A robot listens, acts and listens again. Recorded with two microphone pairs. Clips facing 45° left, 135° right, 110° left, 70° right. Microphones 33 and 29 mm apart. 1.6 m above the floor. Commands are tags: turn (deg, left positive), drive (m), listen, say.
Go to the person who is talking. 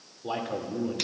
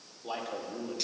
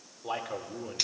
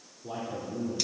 <turn deg="115"/>
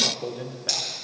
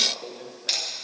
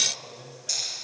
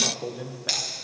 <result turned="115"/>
<turn deg="-20"/>
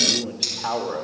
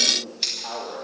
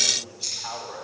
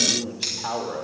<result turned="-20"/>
<drive m="1.0"/>
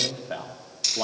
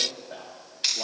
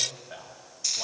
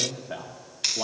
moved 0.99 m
<drive m="1.0"/>
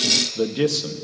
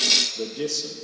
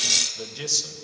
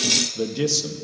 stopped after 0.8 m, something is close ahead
<turn deg="10"/>
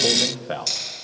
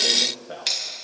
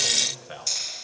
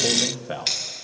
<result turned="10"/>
<say>Arrived at the man speaking, straight ahead.</say>